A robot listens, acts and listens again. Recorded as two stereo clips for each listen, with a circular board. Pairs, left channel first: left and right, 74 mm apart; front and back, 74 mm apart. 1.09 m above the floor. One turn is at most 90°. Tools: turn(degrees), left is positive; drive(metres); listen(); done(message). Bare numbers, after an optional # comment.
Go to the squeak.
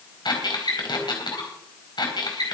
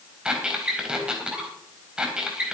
# The squeak: 100° left.
turn(90)
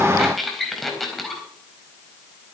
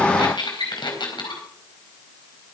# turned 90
drive(1.0)
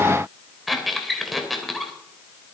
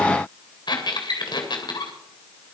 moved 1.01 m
drive(1.0)
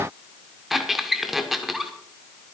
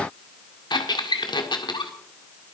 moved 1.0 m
drive(1.0)
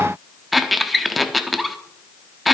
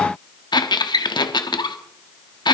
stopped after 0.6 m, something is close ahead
done("Arrived at the squeak, straight ahead.")